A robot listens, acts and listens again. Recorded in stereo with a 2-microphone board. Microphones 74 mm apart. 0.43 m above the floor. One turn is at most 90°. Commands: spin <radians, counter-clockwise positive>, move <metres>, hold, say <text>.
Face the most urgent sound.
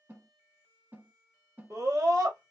spin -0.87
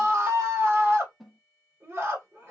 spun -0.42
spin -0.70
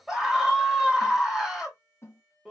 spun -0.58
say Facing the scream.